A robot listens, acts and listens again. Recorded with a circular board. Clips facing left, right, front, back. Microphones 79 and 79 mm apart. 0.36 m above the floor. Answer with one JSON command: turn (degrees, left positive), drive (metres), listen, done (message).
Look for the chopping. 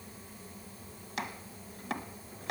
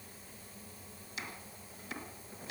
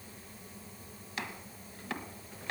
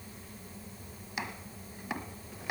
{"turn": 105}
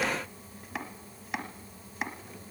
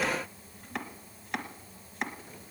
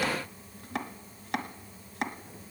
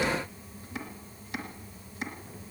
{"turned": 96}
{"done": "Found it: chopping, straight ahead, 1 to 2 m away."}